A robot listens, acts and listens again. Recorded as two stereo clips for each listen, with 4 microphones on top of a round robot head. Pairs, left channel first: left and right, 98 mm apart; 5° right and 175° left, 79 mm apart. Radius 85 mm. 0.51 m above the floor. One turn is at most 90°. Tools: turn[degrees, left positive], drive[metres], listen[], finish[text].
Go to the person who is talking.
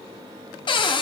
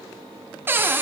Action: listen[]
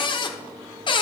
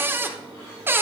Action: listen[]
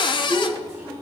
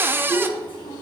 Thought: The child speaking: 10° right.
Action: turn[-10]
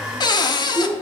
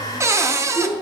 Action: drive[1.0]
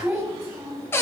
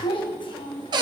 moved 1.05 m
Action: drive[1.0]
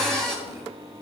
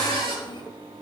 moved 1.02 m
Action: listen[]
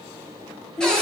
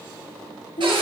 Action: drive[1.0]
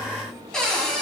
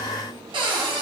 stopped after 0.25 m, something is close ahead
Action: listen[]
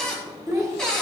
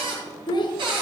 Action: finish[I am next to the child speaking.]